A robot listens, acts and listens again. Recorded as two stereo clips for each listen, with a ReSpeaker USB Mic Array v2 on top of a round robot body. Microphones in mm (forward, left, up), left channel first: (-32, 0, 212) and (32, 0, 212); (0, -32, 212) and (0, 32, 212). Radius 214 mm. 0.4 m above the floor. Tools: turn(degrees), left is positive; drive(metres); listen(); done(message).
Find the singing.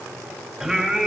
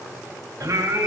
turn(degrees=80)
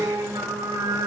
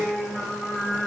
done("Found it: singing, straight ahead.")